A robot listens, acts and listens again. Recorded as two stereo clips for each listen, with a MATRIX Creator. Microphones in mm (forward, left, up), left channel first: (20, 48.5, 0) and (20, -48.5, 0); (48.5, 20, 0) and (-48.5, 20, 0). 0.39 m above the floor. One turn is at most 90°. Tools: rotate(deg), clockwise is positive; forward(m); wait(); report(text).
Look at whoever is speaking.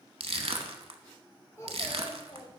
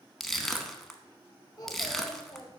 rotate(-50)
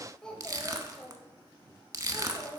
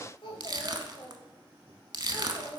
rotate(-40)
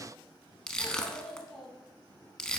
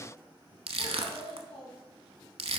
rotate(-10)
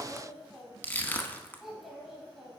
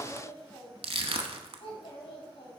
report("Facing the child speaking, 2 to 4 m away.")